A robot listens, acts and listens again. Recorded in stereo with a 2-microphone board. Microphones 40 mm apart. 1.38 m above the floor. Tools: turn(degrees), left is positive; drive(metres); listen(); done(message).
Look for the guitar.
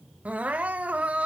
listen()
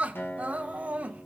turn(degrees=75)
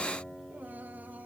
turn(degrees=30)
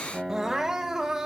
turn(degrees=-15)
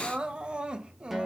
done("Found it: a guitar, straight ahead.")